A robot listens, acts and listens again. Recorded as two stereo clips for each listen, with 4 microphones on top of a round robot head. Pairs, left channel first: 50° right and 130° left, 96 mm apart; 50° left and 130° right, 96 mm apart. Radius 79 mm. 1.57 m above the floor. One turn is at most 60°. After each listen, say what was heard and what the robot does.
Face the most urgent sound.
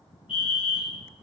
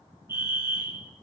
The fire alarm: 65° right. Turn 60° right.
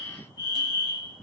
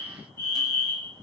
The fire alarm is now 10° right. Turn 10° right.
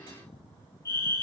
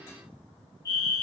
Facing the fire alarm.